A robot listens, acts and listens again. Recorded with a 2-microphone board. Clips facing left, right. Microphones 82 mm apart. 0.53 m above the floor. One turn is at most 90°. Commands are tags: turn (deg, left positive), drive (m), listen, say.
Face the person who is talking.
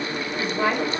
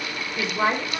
<turn deg="-30"/>
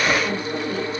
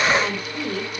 <turn deg="-90"/>
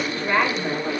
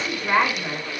<turn deg="-15"/>
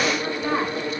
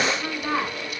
<say>Found it: a woman speaking, straight ahead, over 4 m away.</say>